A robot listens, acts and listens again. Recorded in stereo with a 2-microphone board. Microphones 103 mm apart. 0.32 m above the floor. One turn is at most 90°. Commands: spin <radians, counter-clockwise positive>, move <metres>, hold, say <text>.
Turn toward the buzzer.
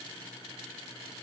hold
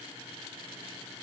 hold
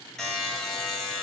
spin 0.52
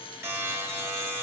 spin -0.44
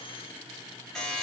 say Facing the buzzer.